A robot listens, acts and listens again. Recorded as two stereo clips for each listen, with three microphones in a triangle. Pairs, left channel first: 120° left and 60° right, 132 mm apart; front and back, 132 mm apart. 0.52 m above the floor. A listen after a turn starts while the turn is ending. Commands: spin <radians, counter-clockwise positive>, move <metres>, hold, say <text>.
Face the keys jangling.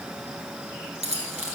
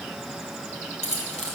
spin -0.52
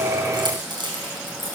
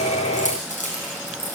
spin -0.17
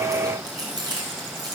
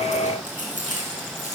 say Found it: keys jangling, straight ahead, over 4 m away.